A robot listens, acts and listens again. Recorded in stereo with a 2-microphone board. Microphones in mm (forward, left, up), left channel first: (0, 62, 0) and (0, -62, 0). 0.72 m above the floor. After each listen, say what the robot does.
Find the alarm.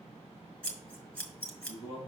Keep listening.
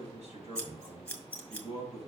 Keep listening.
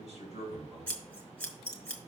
I can't make out an alarm, only a man speaking and scissors.